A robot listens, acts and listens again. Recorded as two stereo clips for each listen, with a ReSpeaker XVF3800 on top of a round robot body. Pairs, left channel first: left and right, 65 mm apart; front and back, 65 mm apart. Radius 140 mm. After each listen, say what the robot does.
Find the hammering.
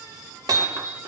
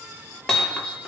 Turn 80° right.
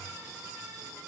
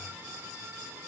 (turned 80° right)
Keep listening.
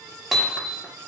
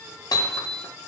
Facing the hammering.